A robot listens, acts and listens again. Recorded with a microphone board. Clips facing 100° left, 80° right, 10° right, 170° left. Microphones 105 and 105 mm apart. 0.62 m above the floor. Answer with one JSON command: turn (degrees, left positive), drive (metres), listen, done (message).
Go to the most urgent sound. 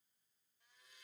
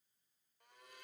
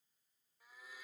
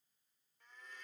{"listen": true}
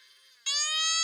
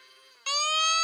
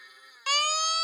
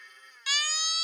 {"turn": -45}
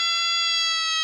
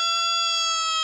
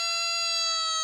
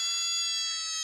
{"turn": -25}
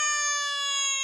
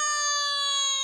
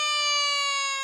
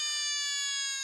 {"drive": 1.0}
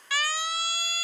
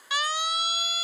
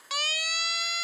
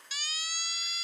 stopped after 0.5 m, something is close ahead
{"turn": -10}
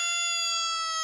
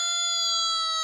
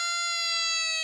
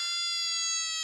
{"done": "Something is in my way. I am facing the siren but have not reached it."}